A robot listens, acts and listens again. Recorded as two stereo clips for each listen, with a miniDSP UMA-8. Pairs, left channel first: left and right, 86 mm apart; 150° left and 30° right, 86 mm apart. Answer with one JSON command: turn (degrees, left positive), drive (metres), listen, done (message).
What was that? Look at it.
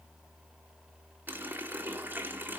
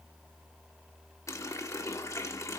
{"turn": -155}
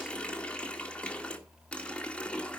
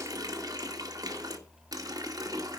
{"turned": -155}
{"turn": 15}
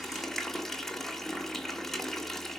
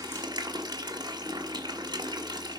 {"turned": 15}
{"done": "Facing the running tap."}